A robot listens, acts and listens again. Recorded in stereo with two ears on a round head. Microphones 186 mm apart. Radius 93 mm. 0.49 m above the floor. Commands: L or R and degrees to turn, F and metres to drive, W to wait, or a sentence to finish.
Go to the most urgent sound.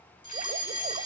L25
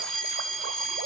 F1.0
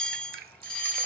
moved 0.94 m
F1.0
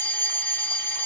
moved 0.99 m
L20
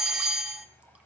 F1.0
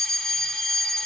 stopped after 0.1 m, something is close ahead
Arrived at the fire alarm, straight ahead.